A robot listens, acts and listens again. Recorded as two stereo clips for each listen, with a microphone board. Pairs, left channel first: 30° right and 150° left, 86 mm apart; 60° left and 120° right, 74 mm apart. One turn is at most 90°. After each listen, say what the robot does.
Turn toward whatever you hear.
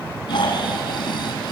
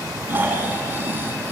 Turn 60° right.
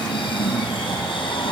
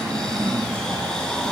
Turn 20° right.
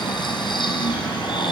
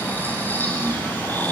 Facing the snoring.